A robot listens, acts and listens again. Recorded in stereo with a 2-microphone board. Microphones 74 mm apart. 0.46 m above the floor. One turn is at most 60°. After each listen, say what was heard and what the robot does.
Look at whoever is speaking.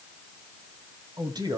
The man speaking: about 60° right or 120° right. Turn 60° right.
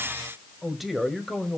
Facing the man speaking.